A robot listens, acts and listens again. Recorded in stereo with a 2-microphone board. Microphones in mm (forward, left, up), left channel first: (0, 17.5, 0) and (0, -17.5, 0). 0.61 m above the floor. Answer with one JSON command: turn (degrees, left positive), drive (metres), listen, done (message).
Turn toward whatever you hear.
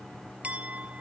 {"turn": -40}
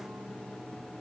{"listen": true}
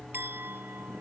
{"turn": -100}
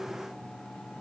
{"listen": true}
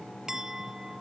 {"turn": -15}
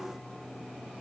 {"listen": true}
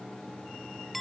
{"done": "Facing the clink."}